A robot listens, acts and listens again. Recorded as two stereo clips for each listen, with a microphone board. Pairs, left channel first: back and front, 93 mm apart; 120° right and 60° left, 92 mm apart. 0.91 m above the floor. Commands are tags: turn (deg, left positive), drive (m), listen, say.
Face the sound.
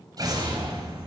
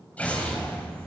<turn deg="-45"/>
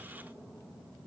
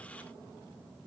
<say>I heard an explosion from this way, but can't make it out now.</say>